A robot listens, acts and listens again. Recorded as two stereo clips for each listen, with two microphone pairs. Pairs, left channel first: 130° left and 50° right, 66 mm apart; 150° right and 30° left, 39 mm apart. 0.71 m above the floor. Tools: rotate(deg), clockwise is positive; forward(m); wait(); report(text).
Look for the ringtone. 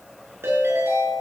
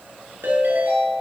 report("Found it: a ringtone, straight ahead.")